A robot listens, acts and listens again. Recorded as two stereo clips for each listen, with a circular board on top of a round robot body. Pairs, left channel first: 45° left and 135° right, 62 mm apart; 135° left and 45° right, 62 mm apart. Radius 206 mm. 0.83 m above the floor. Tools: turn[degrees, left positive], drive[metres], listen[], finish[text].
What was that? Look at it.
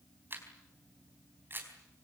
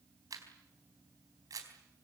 Thought: The camera shutter: 75° right.
Action: turn[-75]
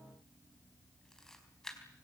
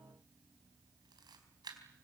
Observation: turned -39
Thought: The camera shutter is now 35° right.
Action: turn[-35]
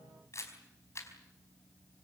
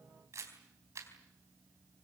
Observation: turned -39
Action: finish[Facing the camera shutter.]